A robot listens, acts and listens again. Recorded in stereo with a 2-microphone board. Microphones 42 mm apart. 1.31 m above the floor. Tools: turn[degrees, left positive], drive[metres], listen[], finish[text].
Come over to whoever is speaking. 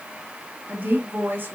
Thought: The woman speaking: about 50° right or 130° right.
Action: turn[-50]
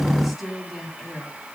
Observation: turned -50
Action: drive[1.0]
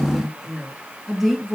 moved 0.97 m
Action: drive[1.0]
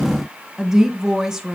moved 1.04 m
Thought: The woman speaking is now 10° right.
Action: turn[-10]
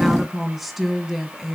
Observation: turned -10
Action: drive[1.0]
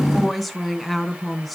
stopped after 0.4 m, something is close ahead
Action: finish[Arrived at the woman speaking, straight ahead.]